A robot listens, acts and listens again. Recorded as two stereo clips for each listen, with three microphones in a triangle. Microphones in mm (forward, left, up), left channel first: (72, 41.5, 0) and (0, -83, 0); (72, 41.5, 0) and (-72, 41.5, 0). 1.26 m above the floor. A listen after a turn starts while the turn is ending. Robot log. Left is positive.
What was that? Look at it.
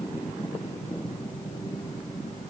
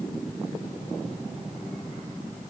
cmd idle
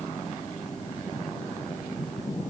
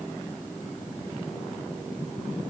cmd idle
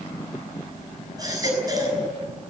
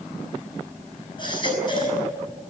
note: The baby crying: 55° right.
cmd yaw -55
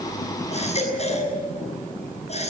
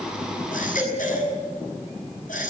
note: The baby crying is now 20° left.
cmd yaw +20
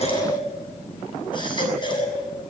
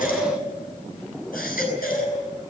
end: Facing the baby crying.